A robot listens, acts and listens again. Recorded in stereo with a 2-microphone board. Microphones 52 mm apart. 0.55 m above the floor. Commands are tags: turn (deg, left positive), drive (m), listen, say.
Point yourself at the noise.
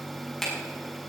<turn deg="30"/>
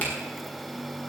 <listen/>
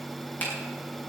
<turn deg="145"/>
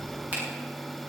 <listen/>
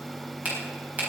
<turn deg="-35"/>
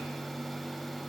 <listen/>
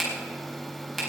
<say>Facing the finger snap, over 4 m away.</say>